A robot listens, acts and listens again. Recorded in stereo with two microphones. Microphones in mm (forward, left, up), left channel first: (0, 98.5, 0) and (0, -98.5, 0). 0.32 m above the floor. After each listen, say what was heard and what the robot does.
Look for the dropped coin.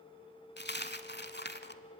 The dropped coin: about 55° left or 125° left. Turn 55° left.
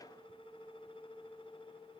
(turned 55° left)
Keep listening.
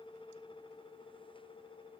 I heard a dropped coin, but can't make it out now. It was about straight ahead or 70° left.